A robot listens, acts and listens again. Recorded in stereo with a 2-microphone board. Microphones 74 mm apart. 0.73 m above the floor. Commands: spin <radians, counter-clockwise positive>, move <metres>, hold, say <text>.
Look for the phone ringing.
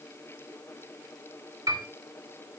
hold
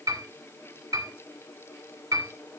hold
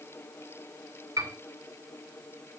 say I can't make out a phone ringing to turn to.